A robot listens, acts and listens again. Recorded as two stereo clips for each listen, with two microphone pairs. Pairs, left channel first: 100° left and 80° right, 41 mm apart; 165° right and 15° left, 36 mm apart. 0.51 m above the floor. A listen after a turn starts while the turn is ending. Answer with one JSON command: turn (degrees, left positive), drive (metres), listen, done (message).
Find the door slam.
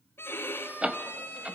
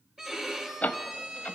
{"turn": -135}
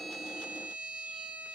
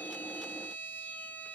{"done": "Facing where the door slam came from. I can't hear it now."}